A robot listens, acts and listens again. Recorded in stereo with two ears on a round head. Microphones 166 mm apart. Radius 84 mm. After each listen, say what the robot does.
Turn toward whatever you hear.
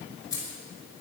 Turn 20° left.
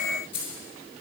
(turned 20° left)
Turn 30° left.
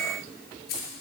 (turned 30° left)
Turn 125° left.
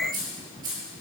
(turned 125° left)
Turn 20° right.
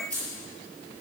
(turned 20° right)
Found it: keys jangling, straight ahead, over 4 m away.